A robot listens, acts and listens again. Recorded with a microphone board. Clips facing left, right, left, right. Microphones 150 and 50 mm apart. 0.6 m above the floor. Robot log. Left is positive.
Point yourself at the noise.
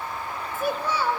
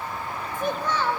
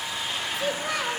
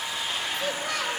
cmd yaw +30
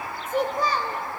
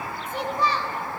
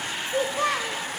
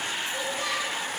note: So it is at 130° left.
cmd yaw +130
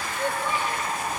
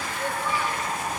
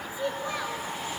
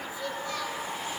note: The child speaking is now 25° left.
cmd yaw +25
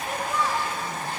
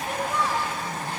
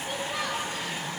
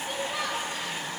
end: Found it: a child speaking, straight ahead, 2 to 4 m away.